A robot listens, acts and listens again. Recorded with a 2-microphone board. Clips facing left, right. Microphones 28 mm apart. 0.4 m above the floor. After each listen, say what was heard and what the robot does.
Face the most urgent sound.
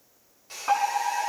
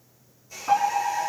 The fire alarm: about 30° left or 150° left. Turn 30° left.
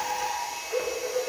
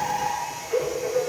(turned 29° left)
Facing the fire alarm, over 4 m away.